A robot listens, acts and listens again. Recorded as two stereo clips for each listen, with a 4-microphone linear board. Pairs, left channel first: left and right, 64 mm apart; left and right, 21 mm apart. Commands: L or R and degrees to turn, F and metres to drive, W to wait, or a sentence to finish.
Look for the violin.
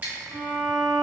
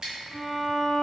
L50
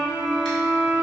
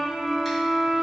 L75
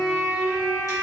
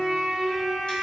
Facing the violin.